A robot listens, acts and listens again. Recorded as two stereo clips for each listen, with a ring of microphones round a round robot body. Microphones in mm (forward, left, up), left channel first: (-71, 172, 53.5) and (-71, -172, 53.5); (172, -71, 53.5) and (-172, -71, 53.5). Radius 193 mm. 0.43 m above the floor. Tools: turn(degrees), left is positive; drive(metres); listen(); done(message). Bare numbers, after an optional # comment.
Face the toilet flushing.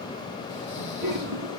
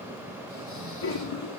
# The toilet flushing: 25° right.
turn(-25)
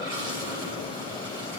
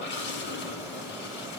# The toilet flushing is now 10° right.
turn(-10)
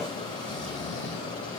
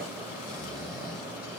listen()
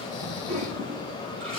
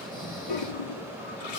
done("Facing the toilet flushing, 2 to 4 m away.")